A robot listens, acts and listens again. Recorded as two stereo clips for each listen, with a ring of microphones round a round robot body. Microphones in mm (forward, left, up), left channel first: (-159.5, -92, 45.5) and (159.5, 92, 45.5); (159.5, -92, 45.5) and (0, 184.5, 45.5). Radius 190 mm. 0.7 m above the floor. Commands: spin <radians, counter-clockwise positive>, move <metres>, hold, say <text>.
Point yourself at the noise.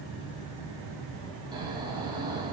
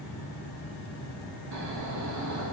spin 1.92
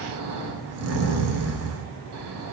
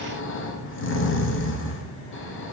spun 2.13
spin -0.26
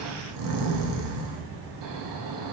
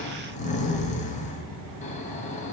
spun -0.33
say Facing the snoring.